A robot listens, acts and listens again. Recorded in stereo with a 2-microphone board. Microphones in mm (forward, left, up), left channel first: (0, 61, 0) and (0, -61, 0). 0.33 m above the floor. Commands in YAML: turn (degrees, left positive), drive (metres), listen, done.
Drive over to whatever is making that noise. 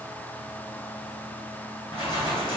turn: 45
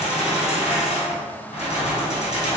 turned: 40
turn: 90
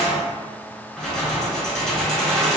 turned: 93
drive: 1.0
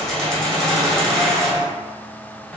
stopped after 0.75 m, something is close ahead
done: "Arrived at the keys jangling, straight ahead."